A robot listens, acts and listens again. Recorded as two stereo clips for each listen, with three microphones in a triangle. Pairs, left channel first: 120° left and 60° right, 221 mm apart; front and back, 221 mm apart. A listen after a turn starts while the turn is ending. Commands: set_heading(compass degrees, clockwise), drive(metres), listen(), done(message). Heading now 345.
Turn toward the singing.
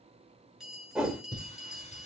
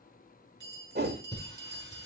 set_heading(285)
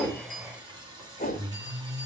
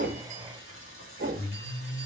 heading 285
set_heading(275)
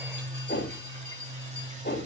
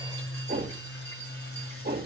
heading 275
done("Found it: singing, straight ahead, 1 to 2 m away.")